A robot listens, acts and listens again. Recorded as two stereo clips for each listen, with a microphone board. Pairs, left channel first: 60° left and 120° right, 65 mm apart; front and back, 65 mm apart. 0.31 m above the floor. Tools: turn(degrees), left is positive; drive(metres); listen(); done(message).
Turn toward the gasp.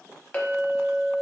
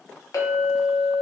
listen()
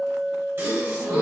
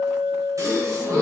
turn(degrees=-160)
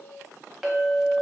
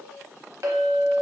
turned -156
done("Facing where the gasp came from. I can't hear it now.")